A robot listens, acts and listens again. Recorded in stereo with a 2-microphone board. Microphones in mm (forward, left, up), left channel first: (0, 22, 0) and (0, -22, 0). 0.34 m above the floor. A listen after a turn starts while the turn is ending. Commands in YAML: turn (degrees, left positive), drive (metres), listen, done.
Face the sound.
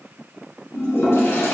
turn: 90
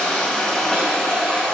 turn: 15
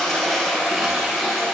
done: "Found it: a toilet flushing, straight ahead, 1 to 2 m away."